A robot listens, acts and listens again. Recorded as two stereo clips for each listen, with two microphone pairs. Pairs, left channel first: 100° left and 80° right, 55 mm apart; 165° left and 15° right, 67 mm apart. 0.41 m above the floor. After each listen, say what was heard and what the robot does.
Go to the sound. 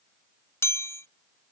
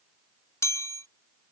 The chime: 130° left. Turn 130° left.
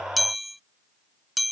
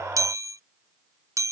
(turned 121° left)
The chime is now 10° left. Turn 10° left.
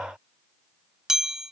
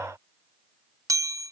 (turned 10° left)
Drive 1.0 m forward.
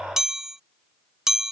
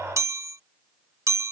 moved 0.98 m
Drive 1.0 m forward.
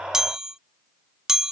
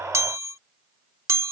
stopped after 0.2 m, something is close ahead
I am next to the chime.